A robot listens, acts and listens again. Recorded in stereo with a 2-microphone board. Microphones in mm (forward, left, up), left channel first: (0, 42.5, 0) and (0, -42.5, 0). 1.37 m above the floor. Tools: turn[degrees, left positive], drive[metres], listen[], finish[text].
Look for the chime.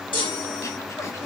Thought: The chime: about 70° left or 110° left.
Action: turn[70]
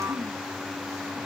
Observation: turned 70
Action: listen[]
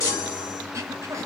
Thought: So it is at 40° left.
Action: turn[40]
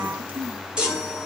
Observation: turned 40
Thought: The chime is now 10° right.
Action: turn[-10]
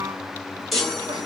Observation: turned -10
Action: finish[Found it: a chime, straight ahead, 1 to 2 m away.]